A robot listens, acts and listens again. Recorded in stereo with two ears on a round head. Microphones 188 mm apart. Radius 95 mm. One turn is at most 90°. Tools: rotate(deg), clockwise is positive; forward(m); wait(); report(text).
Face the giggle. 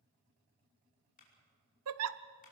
rotate(90)
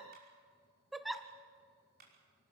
report("Found it: a giggle, straight ahead.")